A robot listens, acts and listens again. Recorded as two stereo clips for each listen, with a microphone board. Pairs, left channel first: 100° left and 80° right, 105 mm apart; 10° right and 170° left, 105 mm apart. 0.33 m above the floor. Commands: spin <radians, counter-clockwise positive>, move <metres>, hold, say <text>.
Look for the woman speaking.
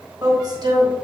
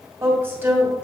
spin -2.09
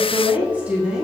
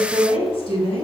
say Found it: a woman speaking, straight ahead, 2 to 4 m away.